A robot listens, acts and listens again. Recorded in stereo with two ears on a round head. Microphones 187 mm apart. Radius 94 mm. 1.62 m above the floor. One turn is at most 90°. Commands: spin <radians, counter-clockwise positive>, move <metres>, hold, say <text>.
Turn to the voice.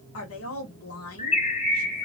spin 1.31
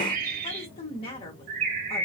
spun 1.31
spin 0.52
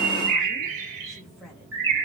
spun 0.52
say Found it: a woman speaking, straight ahead.